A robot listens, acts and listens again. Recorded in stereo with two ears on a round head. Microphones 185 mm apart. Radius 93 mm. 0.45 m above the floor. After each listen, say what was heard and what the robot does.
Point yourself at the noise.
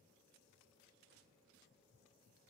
Keep listening.
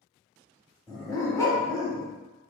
The dog barking: about 15° left or 165° left. Turn 15° left.
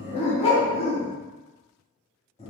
So it is at 150° left. Turn 150° left.
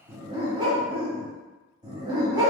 The dog barking is now 20° right. Turn 20° right.
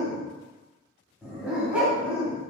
Facing the dog barking, 1 to 2 m away.